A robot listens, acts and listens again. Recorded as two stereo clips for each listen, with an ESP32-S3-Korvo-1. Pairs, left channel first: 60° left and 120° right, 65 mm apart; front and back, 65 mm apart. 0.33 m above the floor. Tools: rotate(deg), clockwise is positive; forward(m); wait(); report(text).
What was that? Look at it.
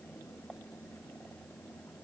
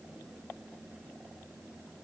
wait()
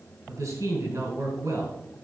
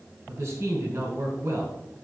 rotate(130)
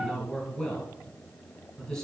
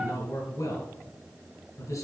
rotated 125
report("Facing the man speaking, 2 to 4 m away.")